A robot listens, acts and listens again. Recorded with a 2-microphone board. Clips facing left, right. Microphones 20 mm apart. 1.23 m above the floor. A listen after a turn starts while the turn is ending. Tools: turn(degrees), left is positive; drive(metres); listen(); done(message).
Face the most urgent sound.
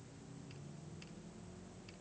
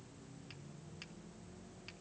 listen()
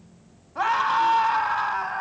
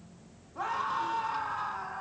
turn(degrees=60)
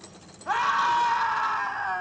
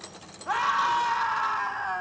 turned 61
done("Facing the scream, 2 to 4 m away.")